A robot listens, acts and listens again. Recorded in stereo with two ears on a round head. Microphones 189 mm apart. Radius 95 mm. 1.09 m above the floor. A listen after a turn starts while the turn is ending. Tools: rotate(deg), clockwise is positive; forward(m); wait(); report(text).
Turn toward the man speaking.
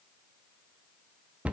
wait()
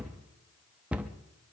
wait()
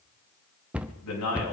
rotate(-90)
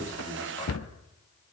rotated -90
wait()
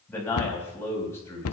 rotate(-15)
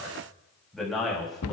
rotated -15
report("Found it: a man speaking, straight ahead, over 4 m away.")